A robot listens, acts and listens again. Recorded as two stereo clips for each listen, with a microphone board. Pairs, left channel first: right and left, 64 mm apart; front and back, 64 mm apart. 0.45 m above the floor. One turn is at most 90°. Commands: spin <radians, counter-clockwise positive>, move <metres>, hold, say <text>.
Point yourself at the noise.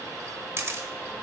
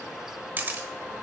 spin 1.57
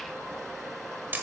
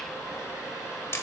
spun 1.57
spin 0.61
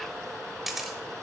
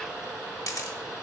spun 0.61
say Found it: a camera shutter, straight ahead, 1 to 2 m away.